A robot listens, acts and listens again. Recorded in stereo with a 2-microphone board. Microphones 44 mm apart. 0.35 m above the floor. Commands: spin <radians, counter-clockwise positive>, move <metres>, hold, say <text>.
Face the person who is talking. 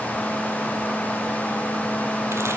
hold
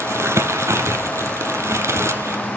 hold
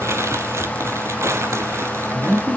spin -0.52
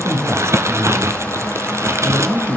spin -2.09
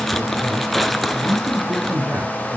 spin -0.70
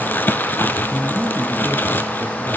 say Found it: a man speaking, straight ahead, over 4 m away.